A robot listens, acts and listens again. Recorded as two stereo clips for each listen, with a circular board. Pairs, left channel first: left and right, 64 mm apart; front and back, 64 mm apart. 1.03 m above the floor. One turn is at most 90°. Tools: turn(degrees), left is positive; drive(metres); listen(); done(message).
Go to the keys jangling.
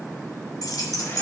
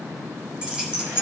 turn(degrees=90)
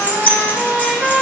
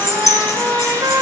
turn(degrees=25)
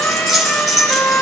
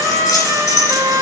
drive(metres=1.0)
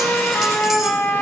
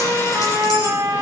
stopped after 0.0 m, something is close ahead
listen()
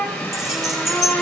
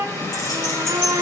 done("Something is in my way. I am facing the keys jangling but have not reached it.")